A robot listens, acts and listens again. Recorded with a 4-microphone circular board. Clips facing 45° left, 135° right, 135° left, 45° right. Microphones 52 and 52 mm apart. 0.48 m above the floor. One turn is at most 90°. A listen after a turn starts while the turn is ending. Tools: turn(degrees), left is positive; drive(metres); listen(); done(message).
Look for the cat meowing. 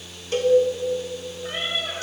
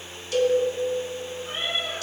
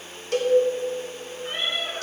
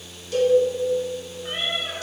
turn(degrees=25)
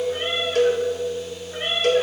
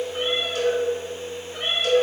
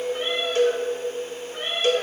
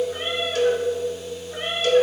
turn(degrees=-20)
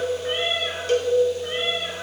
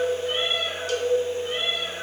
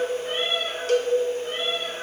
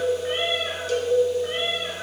turn(degrees=-20)
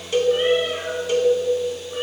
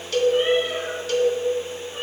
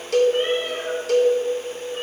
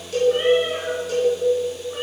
listen()
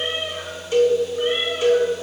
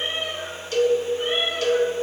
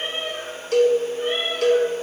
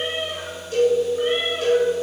turn(degrees=-10)
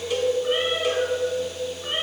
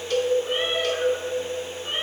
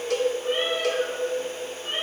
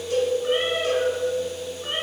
done("Found it: a cat meowing, straight ahead.")